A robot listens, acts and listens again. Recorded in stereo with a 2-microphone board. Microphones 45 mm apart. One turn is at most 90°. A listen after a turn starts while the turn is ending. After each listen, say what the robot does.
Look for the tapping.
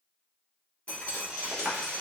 Turn 40° right.
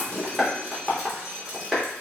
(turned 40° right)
Facing the tapping, 1 to 2 m away.